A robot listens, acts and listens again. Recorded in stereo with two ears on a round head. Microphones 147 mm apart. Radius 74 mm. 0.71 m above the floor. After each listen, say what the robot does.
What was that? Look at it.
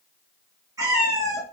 Turn 20° right.
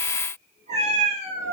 Turn 135° right.
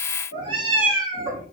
Turn 25° right.
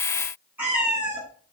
Turn 10° right.
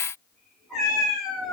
Found it: a cat meowing, straight ahead.